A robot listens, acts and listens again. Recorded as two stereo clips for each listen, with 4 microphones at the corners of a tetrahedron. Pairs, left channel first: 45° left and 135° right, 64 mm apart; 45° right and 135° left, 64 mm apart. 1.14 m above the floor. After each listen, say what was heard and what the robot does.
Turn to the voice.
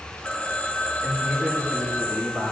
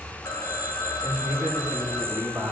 The man speaking: 150° left. Turn 150° left.
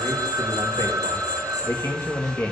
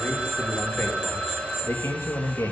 The man speaking is now 10° right. Turn 10° right.
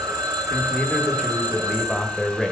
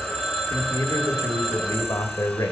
The man speaking is now 35° right. Turn 35° right.
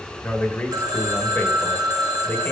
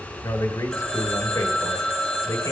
The man speaking is now 20° right. Turn 20° right.
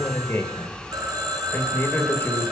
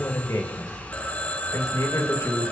Facing the man speaking.